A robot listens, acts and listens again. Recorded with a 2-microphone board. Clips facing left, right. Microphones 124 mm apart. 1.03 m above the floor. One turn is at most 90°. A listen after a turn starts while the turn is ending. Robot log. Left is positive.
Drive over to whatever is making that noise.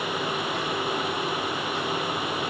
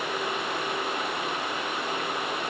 cmd idle
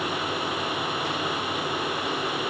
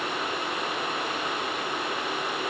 cmd idle
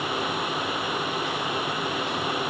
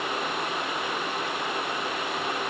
end: I can't make out anything to turn to.